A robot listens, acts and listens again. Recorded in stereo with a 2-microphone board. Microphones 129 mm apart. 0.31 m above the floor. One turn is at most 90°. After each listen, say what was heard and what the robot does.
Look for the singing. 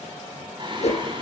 The singing: about 40° right or 140° right. Turn 40° right.
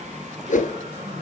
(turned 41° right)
So it is at 110° right. Turn 90° right.
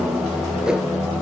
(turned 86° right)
Found it: singing, straight ahead.